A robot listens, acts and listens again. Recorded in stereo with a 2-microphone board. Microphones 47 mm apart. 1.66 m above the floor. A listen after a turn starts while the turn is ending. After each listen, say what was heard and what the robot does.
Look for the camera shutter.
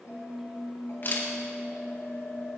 The camera shutter: about 45° left or 135° left. Turn 45° left.
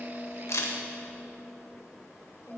So it is at 90° left. Turn 90° left.
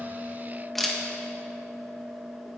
Facing the camera shutter.